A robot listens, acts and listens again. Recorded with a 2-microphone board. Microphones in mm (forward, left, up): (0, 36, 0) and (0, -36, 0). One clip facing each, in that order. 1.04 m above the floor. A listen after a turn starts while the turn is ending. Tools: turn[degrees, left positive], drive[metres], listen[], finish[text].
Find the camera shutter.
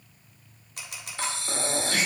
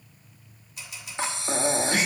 Thought: The camera shutter: about 70° left or 110° left.
Action: turn[70]
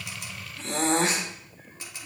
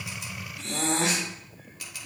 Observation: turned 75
Thought: So it is at 30° left.
Action: turn[30]
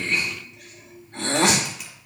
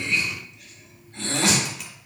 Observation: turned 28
Action: listen[]
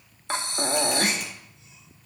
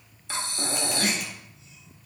Action: listen[]
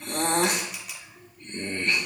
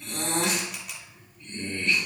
Action: finish[Found it: a camera shutter, straight ahead, 1 to 2 m away.]